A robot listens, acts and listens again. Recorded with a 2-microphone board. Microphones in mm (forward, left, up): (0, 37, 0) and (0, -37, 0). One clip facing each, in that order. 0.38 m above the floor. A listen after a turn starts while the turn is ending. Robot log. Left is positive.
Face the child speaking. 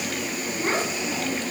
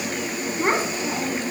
note: The child speaking: about 50° right or 130° right.
cmd yaw -50
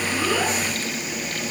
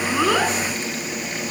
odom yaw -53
cmd idle
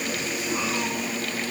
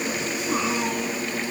cmd idle
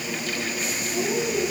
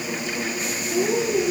note: So it is at 55° right.
cmd yaw -55
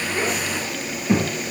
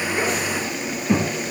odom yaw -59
end: Found it: a child speaking, straight ahead, over 4 m away.